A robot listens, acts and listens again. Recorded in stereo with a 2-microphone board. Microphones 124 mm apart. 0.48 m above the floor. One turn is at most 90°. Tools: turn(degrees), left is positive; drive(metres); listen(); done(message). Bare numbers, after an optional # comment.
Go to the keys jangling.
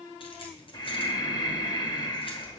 # The keys jangling: about 45° left or 135° left.
turn(45)
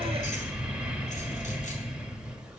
listen()
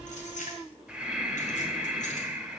# So it is at 90° left.
turn(90)
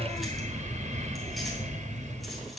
listen()
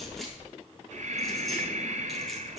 listen()
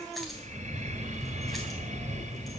done("Facing where the keys jangling came from. I can't hear it now. I did not reach it.")